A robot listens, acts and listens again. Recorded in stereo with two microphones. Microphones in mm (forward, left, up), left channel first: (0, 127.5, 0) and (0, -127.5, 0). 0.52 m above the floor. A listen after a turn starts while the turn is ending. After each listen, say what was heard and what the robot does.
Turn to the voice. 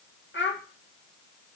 The child speaking: about 45° left or 135° left. Turn 45° left.
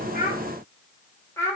So it is at 10° left. Turn 10° left.
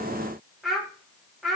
Facing the child speaking.